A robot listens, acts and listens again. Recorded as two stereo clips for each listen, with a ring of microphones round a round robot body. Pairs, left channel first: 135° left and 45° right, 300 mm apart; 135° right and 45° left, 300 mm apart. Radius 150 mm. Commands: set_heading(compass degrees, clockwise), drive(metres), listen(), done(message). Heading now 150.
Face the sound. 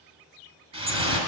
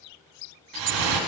set_heading(125)
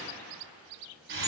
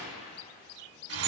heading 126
done("Found it: dripping, straight ahead, 1 to 2 m away.")